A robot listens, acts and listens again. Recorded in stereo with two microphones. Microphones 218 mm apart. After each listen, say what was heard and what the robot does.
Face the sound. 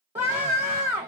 The scream: about 30° right or 150° right. Turn 30° right.
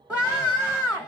Found it: a scream, straight ahead.